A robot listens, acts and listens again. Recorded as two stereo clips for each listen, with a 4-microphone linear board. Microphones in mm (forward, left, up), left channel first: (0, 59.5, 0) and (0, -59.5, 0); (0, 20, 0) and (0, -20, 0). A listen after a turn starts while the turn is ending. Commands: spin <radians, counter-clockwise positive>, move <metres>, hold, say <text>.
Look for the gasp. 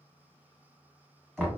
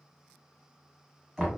hold
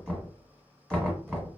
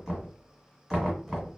hold
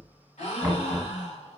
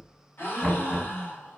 spin 1.22
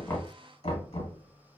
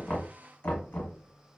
hold
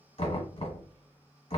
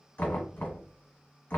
say I heard a gasp, but can't make it out now. It was about straight ahead or 40° left.